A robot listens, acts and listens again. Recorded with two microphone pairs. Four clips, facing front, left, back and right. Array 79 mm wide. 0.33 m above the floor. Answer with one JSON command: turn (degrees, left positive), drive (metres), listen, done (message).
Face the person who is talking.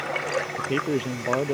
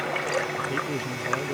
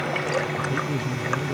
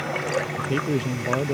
{"turn": -25}
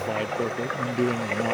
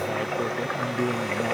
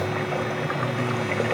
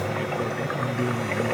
{"turn": 15}
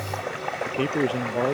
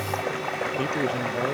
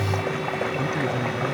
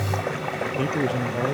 {"done": "Found it: a man speaking, straight ahead."}